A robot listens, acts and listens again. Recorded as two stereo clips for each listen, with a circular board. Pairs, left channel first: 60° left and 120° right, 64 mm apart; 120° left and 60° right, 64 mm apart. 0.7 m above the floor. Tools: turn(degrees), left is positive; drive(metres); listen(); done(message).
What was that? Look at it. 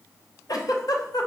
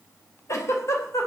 turn(degrees=80)
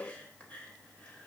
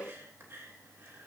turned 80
listen()
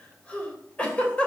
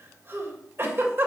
turn(degrees=-10)
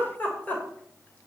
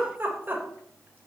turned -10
done("Facing the giggle, 2 to 4 m away.")